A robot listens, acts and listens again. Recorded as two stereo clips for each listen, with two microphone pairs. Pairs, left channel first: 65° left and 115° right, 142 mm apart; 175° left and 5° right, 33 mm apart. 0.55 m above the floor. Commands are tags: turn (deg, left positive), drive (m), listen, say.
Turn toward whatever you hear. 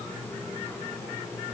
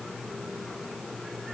<listen/>
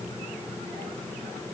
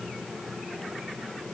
<listen/>
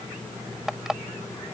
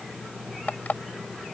<turn deg="160"/>
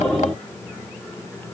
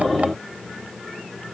<listen/>
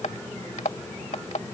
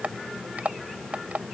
<turn deg="30"/>
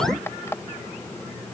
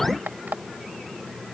<say>Found it: an alarm clock, straight ahead.</say>